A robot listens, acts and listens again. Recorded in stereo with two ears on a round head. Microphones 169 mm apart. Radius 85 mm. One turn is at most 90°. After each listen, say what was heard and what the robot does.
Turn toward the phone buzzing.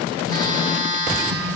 The phone buzzing: about 20° left or 160° left. Turn 20° left.
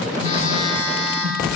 So it is at 140° left. Turn 90° left.
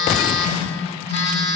The phone buzzing is now 70° left. Turn 70° left.
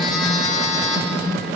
Facing the phone buzzing, 1 to 2 m away.